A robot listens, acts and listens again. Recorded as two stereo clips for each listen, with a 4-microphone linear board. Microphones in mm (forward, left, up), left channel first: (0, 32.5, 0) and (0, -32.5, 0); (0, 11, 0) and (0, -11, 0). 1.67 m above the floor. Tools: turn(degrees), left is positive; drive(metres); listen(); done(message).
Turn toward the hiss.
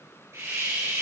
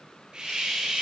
turn(degrees=-40)
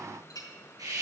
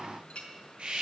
turn(degrees=-95)
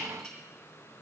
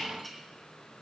listen()
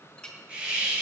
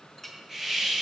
turn(degrees=-20)
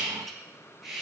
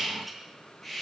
done("Facing the hiss.")